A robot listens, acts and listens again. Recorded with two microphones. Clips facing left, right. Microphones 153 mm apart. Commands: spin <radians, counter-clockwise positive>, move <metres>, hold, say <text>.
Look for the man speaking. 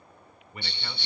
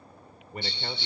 spin -0.70
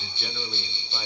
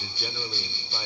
hold
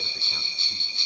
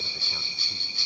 hold
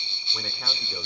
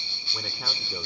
say I heard a man speaking, but can't make it out now. It was about straight ahead or 100° right.